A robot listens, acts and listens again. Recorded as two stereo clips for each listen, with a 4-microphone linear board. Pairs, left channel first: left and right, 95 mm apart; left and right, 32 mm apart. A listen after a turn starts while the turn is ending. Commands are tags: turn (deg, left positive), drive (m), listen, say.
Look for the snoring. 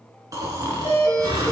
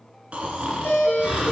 <turn deg="-35"/>
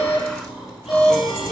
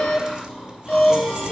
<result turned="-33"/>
<say>Found it: snoring, straight ahead, 2 to 4 m away.</say>